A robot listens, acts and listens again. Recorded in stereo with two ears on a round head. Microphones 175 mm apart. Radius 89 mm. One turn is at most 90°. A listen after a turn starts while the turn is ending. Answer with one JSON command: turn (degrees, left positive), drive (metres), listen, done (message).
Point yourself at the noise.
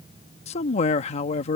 {"turn": 30}
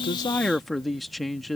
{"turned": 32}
{"done": "Found it: a man speaking, straight ahead."}